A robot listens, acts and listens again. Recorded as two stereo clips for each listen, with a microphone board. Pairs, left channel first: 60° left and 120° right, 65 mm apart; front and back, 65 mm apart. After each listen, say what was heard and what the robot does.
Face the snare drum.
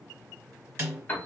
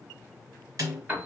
The snare drum: 175° right. Turn 175° right.
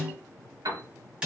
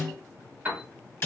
The snare drum is now 50° right. Turn 50° right.
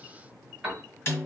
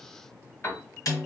The snare drum is now 10° left. Turn 10° left.
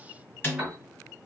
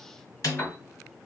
Facing the snare drum.